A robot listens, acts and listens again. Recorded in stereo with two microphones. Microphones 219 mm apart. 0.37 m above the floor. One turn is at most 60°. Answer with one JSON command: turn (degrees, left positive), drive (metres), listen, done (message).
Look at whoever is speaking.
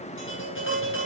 {"listen": true}
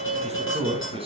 {"turn": -25}
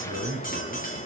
{"turn": -60}
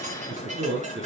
{"turn": -60}
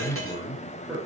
{"done": "Facing the man speaking, over 4 m away."}